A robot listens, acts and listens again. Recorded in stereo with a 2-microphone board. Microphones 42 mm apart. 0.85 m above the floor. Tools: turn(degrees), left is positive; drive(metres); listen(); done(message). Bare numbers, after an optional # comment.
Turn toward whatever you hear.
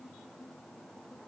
listen()
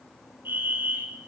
# The fire alarm: about 55° right or 125° right.
turn(-55)
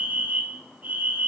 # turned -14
# So it is at 45° right.
turn(-45)
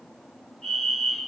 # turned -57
# The fire alarm is now 10° left.
turn(10)
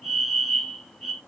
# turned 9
done("Found it: a fire alarm, straight ahead, 2 to 4 m away.")